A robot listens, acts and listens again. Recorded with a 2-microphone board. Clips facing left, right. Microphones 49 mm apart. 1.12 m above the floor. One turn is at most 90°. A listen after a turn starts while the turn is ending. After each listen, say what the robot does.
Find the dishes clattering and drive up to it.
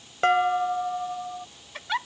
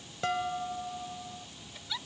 Turn 50° left.
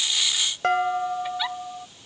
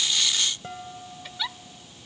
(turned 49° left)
Turn 80° left.
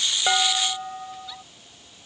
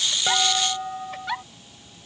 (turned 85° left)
Drive 1.0 m forward.
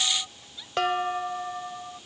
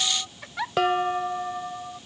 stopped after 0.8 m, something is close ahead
Blocked. The dishes clattering is further on, straight ahead.